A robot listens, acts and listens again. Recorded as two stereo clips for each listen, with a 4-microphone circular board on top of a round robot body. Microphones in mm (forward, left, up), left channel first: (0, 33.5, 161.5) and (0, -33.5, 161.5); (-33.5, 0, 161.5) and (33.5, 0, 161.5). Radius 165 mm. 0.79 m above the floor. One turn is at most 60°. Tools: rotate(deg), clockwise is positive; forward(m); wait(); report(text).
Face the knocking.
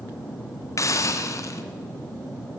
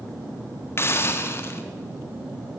wait()
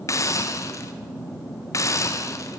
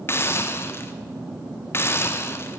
wait()
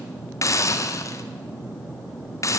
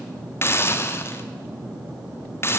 report("I can't make out knocking to turn to.")